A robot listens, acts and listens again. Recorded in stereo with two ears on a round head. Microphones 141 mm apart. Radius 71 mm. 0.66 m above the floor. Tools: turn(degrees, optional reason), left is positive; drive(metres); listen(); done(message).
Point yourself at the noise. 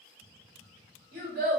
turn(degrees=-55, reason="The child speaking: about 55° right or 125° right.")
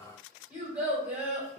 turn(degrees=-10, reason="So it is at 10° right.")
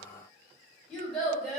done("Found it: a child speaking, straight ahead.")